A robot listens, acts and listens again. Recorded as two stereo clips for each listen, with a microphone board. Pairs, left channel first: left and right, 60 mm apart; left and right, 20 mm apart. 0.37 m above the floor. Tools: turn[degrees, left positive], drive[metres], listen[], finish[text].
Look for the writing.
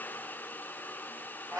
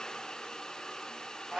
Action: listen[]
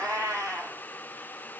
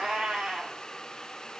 Action: listen[]
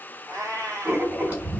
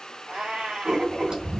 Thought: The writing: about 35° right or 145° right.
Action: turn[-35]
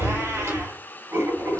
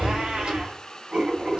Thought: So it is at 110° right.
Action: turn[-110]
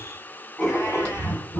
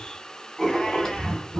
Thought: The writing is now 25° left.
Action: turn[25]
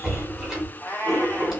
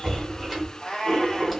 Action: finish[Found it: writing, straight ahead.]